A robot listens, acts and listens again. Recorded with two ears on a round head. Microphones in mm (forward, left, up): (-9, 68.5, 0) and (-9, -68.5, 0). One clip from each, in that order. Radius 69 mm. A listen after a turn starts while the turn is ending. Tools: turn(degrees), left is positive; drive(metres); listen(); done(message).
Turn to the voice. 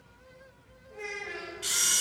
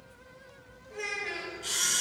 turn(degrees=-90)
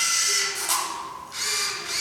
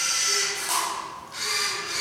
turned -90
listen()
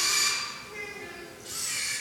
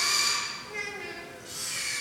turn(degrees=-35)
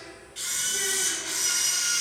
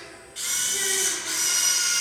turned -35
listen()
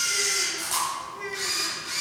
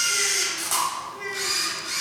done("Facing the child speaking, 2 to 4 m away.")